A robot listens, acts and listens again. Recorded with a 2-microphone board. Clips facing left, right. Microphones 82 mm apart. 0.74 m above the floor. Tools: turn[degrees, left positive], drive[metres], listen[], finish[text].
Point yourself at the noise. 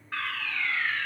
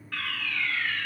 Thought: The fire alarm: about 25° left or 155° left.
Action: turn[25]
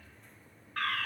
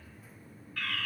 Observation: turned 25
Thought: So it is at 125° left.
Action: turn[125]
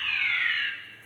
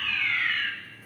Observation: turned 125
Action: finish[Found it: a fire alarm, straight ahead.]